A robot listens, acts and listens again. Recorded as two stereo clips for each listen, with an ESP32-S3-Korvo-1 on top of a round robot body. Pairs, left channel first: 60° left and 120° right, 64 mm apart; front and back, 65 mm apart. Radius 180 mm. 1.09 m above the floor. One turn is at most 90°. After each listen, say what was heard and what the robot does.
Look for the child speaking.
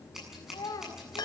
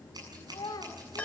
The child speaking: 30° left. Turn 30° left.
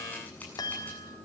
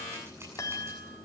Keep listening.
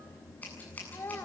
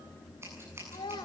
Facing the child speaking.